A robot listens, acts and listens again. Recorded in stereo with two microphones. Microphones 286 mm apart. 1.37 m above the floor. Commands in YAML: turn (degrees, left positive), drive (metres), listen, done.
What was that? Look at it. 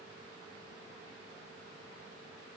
listen: true
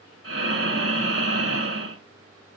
turn: -50
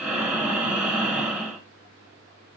done: "Found it: breathing, straight ahead."